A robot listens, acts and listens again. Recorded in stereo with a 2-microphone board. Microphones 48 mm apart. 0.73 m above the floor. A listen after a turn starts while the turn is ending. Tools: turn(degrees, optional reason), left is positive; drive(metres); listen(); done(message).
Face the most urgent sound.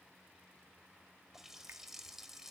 listen()
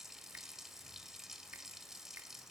listen()
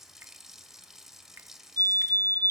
turn(degrees=60, reason="The fire alarm: about 60° left or 120° left.")
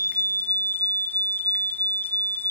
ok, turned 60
turn(degrees=50, reason="So it is at 50° left.")
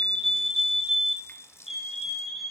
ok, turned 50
done("Facing the fire alarm.")